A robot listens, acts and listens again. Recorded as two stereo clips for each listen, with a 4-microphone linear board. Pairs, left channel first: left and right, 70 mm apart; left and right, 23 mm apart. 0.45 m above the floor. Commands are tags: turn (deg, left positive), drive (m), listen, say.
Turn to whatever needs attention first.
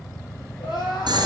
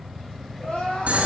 <turn deg="90"/>
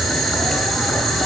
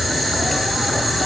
<listen/>
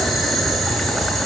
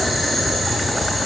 <listen/>
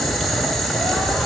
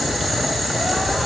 <say>I heard crying from this way, but can't make it out now.</say>